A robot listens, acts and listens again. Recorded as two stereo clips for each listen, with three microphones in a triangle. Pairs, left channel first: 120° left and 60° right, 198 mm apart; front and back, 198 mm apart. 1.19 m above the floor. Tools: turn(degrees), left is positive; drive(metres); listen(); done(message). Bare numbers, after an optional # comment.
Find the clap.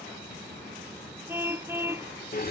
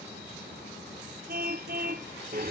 listen()
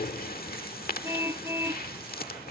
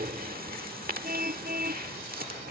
listen()
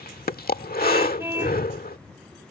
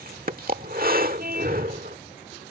done("I can't make out a clap, only breathing and a car horn.")